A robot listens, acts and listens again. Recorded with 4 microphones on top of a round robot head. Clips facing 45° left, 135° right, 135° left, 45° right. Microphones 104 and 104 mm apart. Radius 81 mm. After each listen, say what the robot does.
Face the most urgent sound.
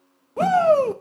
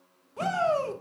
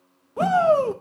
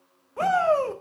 Turn 70° left.
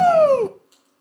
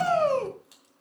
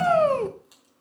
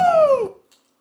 Turn 10° left.
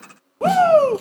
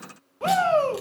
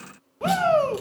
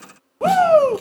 Found it: a shout, straight ahead.